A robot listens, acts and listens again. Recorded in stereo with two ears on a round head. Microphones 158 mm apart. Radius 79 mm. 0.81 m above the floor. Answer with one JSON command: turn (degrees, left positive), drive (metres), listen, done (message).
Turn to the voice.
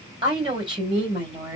{"turn": -25}
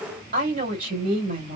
{"turn": -125}
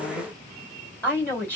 {"turn": 10}
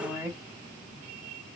{"done": "Found it: a woman speaking, straight ahead, 2 to 4 m away."}